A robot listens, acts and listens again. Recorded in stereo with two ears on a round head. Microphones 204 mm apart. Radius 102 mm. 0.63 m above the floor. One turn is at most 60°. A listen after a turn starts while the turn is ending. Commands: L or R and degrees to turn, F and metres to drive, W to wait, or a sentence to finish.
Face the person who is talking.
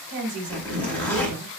R60
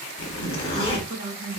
R40
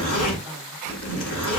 W
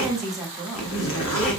Found it: a woman speaking, straight ahead.